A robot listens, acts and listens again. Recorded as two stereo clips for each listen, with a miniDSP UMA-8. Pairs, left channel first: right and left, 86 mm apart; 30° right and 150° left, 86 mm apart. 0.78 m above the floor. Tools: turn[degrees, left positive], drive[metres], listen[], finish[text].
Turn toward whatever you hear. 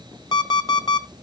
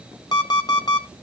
Thought: The alarm clock: 60° right.
Action: turn[-60]
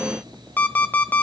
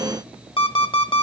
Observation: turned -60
Thought: The alarm clock is now 20° right.
Action: turn[-20]
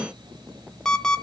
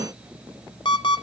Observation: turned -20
Thought: The alarm clock is now 10° right.
Action: turn[-10]
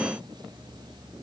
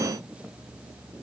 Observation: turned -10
Action: listen[]
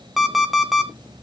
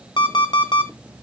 Action: finish[Found it: an alarm clock, straight ahead.]